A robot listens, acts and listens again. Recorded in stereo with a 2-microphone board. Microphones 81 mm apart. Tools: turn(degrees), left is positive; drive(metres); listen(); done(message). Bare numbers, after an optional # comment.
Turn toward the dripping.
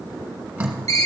# The dripping: about 20° right or 160° right.
turn(-20)
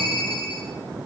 listen()
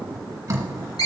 # So it is at 140° right.
turn(-140)
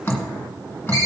# The dripping is now 25° left.
turn(25)
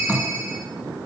done("Found it: dripping, straight ahead.")